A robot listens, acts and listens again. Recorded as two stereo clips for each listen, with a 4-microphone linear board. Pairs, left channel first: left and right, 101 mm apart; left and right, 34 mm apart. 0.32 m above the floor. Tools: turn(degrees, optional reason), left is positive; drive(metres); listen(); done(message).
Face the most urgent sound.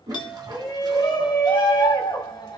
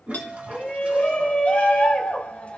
turn(degrees=45, reason="The shout: about 45° left or 135° left.")
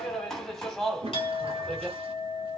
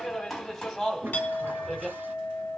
done("Facing the shout.")